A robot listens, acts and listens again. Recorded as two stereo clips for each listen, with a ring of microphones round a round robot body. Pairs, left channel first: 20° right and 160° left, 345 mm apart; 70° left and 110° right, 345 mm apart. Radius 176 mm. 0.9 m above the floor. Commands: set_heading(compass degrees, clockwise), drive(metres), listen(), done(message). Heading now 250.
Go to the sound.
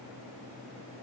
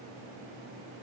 listen()
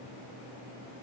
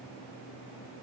listen()
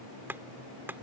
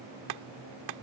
set_heading(10)
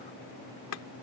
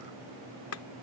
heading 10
set_heading(350)
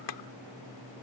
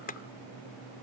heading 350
drive(1.0)
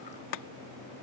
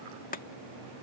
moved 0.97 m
drive(1.0)
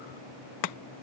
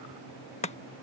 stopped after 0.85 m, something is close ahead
done("I am next to the chopping.")